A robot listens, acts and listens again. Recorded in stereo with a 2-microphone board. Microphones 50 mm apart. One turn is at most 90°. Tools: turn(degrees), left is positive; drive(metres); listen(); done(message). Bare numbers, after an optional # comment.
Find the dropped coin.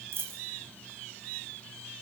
# The dropped coin: about 55° right or 125° right.
turn(-55)
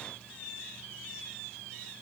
listen()
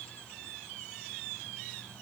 done("I heard a dropped coin, but can't make it out now. It was about straight ahead or 70° right.")